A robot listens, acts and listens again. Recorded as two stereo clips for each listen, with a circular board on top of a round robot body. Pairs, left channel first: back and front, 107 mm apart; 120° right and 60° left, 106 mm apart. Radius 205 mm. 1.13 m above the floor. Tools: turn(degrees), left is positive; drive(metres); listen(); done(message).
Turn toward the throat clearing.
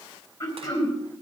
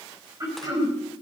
turn(degrees=115)
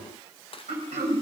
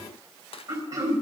done("Facing the throat clearing.")